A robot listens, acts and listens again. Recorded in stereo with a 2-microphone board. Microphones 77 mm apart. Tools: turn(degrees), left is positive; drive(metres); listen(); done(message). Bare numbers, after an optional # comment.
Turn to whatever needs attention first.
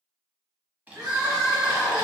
# The crying: about 65° right or 115° right.
turn(-65)
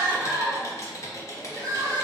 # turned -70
# So it is at 45° right.
turn(-45)
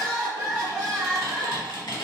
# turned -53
# The crying is now 10° left.
turn(10)
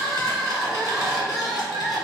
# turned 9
done("Facing the crying.")